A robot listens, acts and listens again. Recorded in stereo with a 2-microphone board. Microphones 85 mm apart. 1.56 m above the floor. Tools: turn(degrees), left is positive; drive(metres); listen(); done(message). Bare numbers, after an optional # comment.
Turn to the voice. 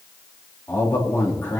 # The man speaking: about 30° left or 150° left.
turn(30)
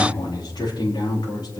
# So it is at 120° left.
turn(120)
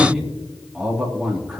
done("Facing the man speaking, 2 to 4 m away.")